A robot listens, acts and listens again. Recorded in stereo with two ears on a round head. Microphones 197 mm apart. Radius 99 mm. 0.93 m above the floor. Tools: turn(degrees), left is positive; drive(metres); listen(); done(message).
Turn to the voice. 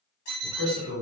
turn(degrees=65)
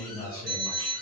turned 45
turn(degrees=50)
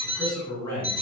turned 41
turn(degrees=10)
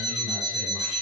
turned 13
listen()
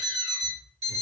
listen()
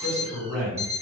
done("Facing the man speaking.")